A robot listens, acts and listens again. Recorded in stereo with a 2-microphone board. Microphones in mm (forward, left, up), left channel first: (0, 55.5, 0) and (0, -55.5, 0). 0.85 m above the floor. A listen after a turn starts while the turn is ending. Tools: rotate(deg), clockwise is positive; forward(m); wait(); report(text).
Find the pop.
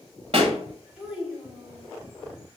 rotate(65)
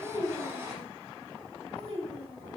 wait()
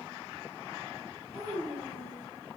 report("I heard a pop, but can't make it out now. It was about straight ahead or 50° right.")